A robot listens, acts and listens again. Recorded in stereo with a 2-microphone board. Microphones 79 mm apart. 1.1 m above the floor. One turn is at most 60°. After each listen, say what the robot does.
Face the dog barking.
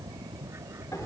Keep listening.
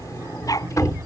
Turn 50° left.
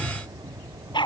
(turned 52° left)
Turn 60° left.
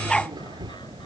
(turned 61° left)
Turn 10° left.
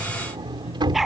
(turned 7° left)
Found it: a dog barking, straight ahead.